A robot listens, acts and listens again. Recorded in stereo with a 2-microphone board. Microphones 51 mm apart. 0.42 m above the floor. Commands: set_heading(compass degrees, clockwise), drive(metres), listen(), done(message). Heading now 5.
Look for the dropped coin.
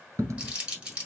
set_heading(95)
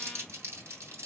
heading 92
done("Facing where the dropped coin came from. I can't hear it now.")